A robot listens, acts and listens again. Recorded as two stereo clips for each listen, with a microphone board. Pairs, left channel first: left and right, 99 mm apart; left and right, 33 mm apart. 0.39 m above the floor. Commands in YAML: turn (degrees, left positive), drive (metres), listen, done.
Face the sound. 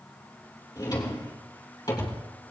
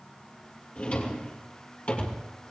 turn: 40
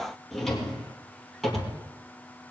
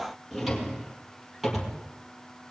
done: "Found it: a drawer, straight ahead."